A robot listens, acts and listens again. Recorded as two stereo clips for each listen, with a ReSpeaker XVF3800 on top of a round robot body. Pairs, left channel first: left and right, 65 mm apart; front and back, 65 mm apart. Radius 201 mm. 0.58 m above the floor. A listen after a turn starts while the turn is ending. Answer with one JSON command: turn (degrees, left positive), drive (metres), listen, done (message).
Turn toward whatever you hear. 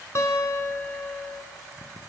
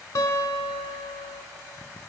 {"turn": 40}
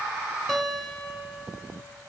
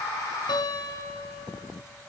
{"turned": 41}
{"done": "Facing the guitar."}